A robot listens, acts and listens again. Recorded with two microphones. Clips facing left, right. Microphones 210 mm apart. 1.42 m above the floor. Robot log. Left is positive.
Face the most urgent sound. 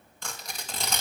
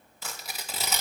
cmd idle
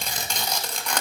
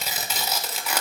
cmd idle
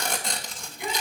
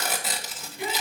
cmd yaw -90
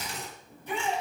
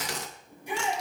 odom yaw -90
note: So it is at 15° right.
cmd yaw -15
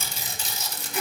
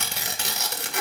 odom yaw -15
cmd idle
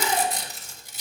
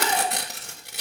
cmd idle
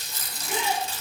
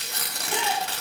end: Found it: a shout, straight ahead.